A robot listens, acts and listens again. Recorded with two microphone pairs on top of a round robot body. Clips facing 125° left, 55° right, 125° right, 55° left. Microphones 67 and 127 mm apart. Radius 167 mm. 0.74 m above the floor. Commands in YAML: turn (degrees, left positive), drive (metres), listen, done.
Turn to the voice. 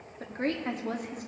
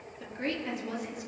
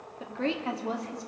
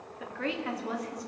turn: 170
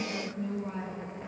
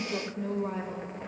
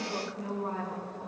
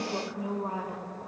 turn: -20
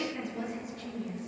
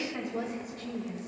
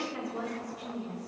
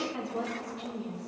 turn: -10
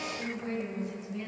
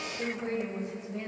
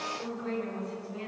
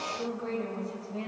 done: "Facing the woman speaking."